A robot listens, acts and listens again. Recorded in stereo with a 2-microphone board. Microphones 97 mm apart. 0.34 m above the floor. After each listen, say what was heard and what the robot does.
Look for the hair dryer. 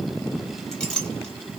Keep listening.
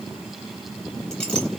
Keep listening.
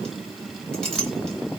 I can't make out a hair dryer, only a clink.